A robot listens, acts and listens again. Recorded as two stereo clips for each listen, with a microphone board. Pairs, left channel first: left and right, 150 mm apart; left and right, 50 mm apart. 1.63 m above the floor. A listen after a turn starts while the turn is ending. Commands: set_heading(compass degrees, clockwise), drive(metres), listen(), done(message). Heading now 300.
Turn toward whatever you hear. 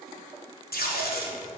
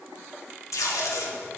set_heading(210)
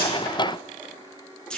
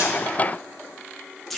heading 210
done("Facing the tape being pulled.")